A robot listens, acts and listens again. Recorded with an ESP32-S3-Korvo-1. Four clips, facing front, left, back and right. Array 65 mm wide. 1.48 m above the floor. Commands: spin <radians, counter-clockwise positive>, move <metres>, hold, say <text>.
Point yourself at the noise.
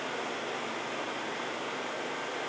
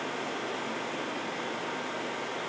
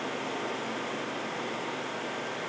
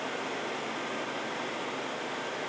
hold
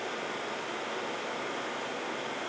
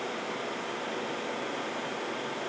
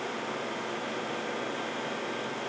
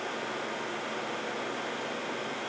hold
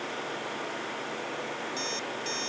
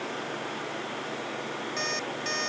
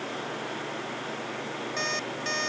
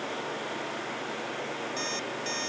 spin 2.71
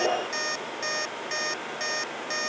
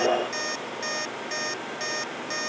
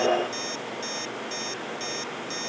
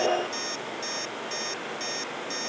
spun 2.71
spin 0.52
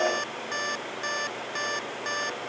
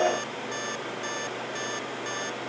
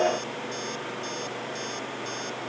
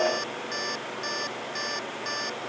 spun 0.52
spin -0.17
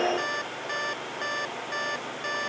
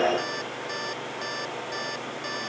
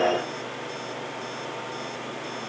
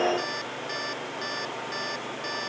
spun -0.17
say Found it: an alarm clock, straight ahead.